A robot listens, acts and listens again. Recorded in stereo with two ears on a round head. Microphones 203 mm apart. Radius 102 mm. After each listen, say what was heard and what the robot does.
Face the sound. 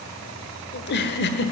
The giggle: about 50° left or 130° left. Turn 50° left.
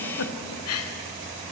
So it is at 80° left. Turn 80° left.
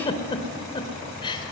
The giggle is now 20° left. Turn 20° left.
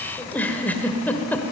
The giggle is now 10° left. Turn 10° left.
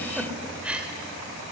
Facing the giggle, 1 to 2 m away.